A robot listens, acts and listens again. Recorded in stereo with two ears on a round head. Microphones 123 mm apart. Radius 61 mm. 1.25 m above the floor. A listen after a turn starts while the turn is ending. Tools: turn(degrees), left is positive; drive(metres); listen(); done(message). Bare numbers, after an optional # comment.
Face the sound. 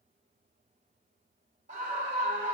# The scream: about 55° right or 125° right.
turn(-55)
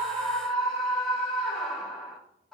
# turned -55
done("Facing the scream, 1 to 2 m away.")